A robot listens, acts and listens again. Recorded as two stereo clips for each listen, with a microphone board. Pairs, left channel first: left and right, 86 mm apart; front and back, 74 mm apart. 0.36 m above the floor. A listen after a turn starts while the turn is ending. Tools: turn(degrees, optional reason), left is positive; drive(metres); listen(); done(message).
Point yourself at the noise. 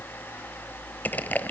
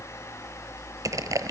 turn(degrees=155, reason="The crushing: 155° left.")
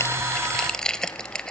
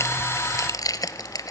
turn(degrees=10, reason="The crushing is now 10° left.")
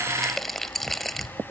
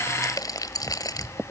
done("Facing the crushing, 1 to 2 m away.")